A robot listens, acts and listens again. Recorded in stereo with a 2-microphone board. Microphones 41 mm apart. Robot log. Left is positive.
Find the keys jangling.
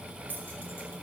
note: The keys jangling: about 55° left or 125° left.
cmd yaw +55
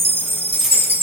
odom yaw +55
end: Facing the keys jangling.